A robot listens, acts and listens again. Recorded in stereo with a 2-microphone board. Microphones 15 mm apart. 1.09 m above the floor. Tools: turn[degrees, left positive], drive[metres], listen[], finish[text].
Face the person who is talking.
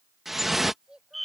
Thought: The child speaking: about 60° right or 120° right.
Action: turn[-60]
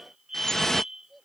Action: finish[Found it: a child speaking, straight ahead.]